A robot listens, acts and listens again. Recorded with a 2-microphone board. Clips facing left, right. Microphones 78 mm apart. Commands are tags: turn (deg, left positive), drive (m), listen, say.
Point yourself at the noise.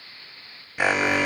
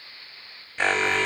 <turn deg="30"/>
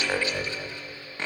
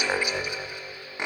<turn deg="-20"/>
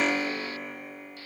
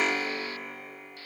<say>Found it: an alarm, straight ahead, 1 to 2 m away.</say>